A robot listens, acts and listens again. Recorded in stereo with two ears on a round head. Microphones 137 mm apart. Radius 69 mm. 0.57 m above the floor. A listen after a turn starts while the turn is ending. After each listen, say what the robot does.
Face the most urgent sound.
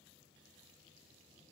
Keep listening.
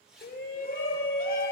Turn 65° left.
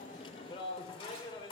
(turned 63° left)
Turn 35° left.
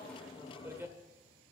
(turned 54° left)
Turn 15° right.
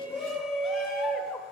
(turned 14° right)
Found it: a shout, straight ahead.